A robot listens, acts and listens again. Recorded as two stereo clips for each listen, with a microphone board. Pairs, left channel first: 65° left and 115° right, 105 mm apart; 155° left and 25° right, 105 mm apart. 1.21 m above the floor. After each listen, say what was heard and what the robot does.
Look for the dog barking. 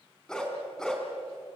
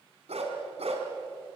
The dog barking: 15° right. Turn 15° right.
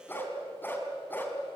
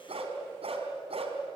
Facing the dog barking, 2 to 4 m away.